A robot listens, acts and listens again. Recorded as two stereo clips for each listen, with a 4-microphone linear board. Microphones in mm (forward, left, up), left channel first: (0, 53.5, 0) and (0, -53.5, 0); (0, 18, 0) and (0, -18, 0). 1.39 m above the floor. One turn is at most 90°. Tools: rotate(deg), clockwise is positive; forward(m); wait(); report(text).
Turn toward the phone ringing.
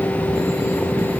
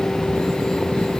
wait()
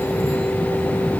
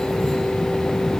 wait()
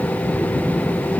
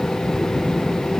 report("I can't make out a phone ringing to turn to.")